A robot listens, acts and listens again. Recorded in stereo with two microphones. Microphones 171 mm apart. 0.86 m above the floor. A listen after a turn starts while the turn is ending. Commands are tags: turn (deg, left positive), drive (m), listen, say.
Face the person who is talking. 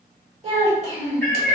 <turn deg="-40"/>
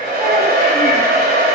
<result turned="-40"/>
<listen/>
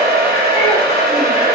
<listen/>
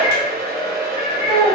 <say>Facing the child speaking.</say>